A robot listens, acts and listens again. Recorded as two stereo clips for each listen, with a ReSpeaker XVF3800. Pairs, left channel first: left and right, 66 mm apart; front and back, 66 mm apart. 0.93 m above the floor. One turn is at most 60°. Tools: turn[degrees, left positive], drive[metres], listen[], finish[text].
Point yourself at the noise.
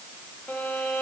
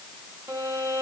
Thought: The violin: 160° left.
Action: turn[60]
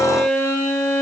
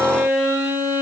Thought: The violin is now 120° left.
Action: turn[60]
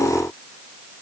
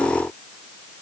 Thought: Nothing new. It was at 60° left.
Action: turn[60]
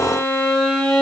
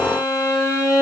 Thought: The violin is now 15° left.
Action: turn[15]
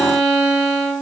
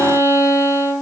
Action: finish[Facing the violin, 1 to 2 m away.]